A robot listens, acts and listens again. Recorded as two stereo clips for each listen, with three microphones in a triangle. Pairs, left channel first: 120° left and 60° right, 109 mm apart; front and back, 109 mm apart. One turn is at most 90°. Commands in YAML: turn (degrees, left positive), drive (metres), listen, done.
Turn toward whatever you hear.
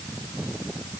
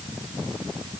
listen: true
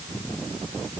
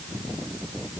listen: true
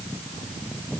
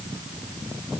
done: "I can't make out anything."